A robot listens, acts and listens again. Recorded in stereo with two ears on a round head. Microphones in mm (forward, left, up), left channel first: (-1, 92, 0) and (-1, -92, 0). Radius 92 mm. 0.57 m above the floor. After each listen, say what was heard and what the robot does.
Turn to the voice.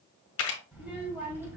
Turn 30° right.
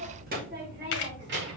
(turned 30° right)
So it is at 120° right. Turn 120° right.
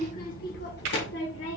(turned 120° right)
The child speaking is now 65° left. Turn 65° left.
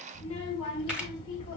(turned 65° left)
The child speaking is now 25° left. Turn 25° left.
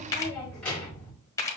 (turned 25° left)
Facing the child speaking.